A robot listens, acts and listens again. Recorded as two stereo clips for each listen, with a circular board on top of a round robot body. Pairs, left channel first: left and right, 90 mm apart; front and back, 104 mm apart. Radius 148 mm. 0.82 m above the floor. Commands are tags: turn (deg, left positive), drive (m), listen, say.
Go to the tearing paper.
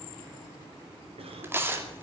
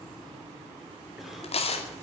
<turn deg="-25"/>
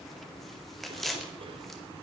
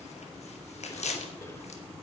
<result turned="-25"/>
<drive m="1.0"/>
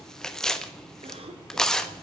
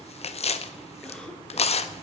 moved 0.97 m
<drive m="1.0"/>
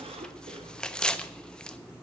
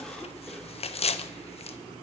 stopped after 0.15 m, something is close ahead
<turn deg="10"/>
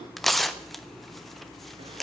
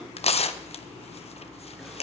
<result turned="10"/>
<say>I am next to the tearing paper.</say>